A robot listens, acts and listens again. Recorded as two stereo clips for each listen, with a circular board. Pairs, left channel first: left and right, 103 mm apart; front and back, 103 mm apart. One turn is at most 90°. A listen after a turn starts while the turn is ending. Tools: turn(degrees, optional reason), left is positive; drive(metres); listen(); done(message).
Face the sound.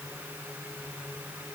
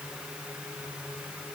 listen()
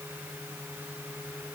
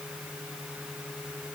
listen()
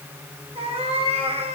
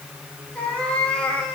turn(degrees=-85, reason="The cat meowing: 85° right.")
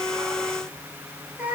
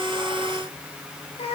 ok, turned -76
turn(degrees=-15, reason="The cat meowing is now 15° right.")
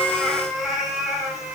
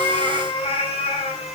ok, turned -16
done("Found it: a cat meowing, straight ahead.")